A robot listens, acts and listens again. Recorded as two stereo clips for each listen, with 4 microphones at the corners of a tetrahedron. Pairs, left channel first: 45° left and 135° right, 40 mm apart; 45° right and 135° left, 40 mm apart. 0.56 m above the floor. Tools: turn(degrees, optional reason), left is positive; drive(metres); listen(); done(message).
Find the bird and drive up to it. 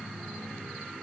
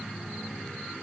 listen()
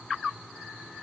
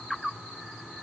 listen()
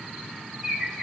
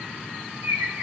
turn(degrees=140, reason="The bird: 140° left.")
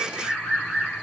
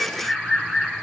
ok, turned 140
turn(degrees=30, reason="The bird is now 30° left.")
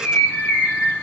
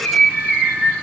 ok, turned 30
drive(metres=1.0)
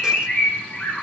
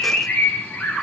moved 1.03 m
drive(metres=1.0)
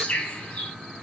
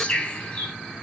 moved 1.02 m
drive(metres=1.0)
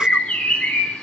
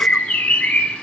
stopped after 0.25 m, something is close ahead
done("I am next to the bird.")